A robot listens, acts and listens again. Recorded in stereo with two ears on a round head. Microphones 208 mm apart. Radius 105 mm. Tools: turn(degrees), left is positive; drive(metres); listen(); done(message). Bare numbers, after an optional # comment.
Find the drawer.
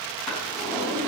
turn(30)
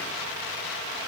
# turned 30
listen()
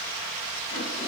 listen()
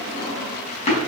# So it is at 150° left.
turn(150)
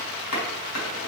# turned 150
# The drawer is now 75° left.
turn(75)
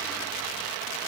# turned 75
listen()
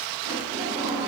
# The drawer is now 15° right.
turn(-15)
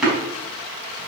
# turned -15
done("Facing the drawer.")